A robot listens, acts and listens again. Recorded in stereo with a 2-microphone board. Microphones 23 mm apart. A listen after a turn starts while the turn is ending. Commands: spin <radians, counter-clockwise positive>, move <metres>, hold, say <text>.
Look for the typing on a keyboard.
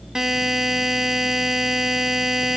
hold
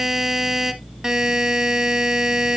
hold
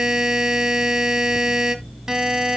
say I can't make out typing on a keyboard to turn to.